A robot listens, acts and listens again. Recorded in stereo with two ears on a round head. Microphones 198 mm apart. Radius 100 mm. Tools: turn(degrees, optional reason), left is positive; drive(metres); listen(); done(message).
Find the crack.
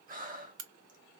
turn(degrees=-75, reason="The crack: about 75° right or 105° right.")
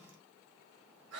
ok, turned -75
listen()
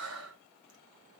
done("I heard a crack, but can't make it out now. It was about straight ahead or 30° right.")